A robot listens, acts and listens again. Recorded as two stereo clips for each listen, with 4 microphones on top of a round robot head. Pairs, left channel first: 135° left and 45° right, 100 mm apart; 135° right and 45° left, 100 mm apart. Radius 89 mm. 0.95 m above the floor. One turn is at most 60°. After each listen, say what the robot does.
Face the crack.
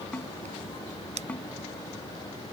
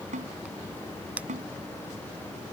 Turn 30° right.
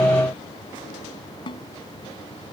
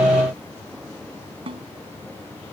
Facing where the crack came from. I can't hear it now.